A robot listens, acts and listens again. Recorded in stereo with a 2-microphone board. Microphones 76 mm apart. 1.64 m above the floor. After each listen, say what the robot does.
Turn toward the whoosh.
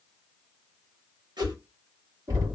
Turn 70° right.
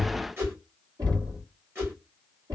Turn 30° right.
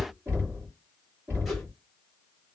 Keep listening.
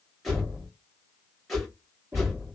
Found it: a whoosh, straight ahead, 1 to 2 m away.